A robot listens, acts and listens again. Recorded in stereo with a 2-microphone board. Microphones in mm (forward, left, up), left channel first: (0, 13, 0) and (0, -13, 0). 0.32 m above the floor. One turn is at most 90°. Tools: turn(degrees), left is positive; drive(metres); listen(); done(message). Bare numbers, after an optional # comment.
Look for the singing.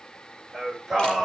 turn(30)
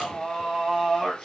# So it is at 155° left.
turn(90)
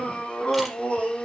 # The singing is now 45° left.
turn(45)
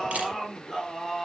done("Found it: singing, straight ahead, over 4 m away.")